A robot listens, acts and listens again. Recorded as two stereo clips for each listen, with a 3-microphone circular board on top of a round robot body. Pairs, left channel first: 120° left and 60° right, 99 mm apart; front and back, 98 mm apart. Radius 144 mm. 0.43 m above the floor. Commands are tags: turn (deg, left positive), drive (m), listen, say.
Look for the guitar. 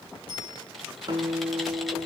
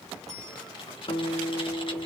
<turn deg="-20"/>
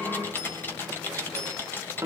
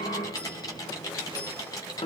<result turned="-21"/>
<say>Facing the guitar, 1 to 2 m away.</say>